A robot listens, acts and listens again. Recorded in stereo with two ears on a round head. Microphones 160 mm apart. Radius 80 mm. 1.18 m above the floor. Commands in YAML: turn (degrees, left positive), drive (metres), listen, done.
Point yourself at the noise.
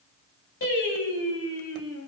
turn: 90
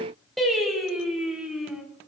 done: "Found it: singing, straight ahead."